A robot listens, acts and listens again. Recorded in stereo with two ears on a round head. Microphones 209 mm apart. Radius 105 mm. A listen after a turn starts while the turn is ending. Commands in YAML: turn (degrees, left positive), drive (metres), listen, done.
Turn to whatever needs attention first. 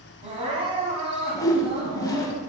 turn: -25
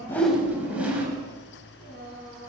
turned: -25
turn: -130
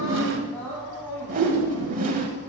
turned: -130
turn: 10
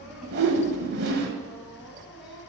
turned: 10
done: "Found it: crying, straight ahead."